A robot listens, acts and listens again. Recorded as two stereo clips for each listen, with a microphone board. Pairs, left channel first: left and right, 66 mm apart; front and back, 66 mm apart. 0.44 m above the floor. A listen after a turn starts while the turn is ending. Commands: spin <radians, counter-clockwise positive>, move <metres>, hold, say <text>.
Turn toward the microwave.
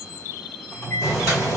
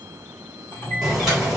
spin 0.79
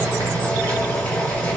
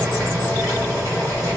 hold
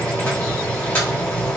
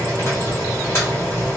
hold
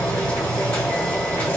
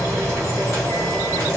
say Facing where the microwave came from. I can't hear it now.